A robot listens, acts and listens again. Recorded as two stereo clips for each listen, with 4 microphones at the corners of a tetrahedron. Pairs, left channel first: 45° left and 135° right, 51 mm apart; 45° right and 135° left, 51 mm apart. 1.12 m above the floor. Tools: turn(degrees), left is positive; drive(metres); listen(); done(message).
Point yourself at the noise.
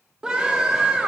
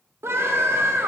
turn(degrees=155)
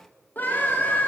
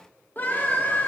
done("Facing the scream.")